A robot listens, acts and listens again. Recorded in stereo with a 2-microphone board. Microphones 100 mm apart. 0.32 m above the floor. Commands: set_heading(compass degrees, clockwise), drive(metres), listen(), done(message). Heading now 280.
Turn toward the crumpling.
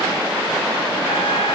listen()
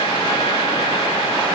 listen()
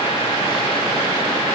done("I can't make out crumpling.")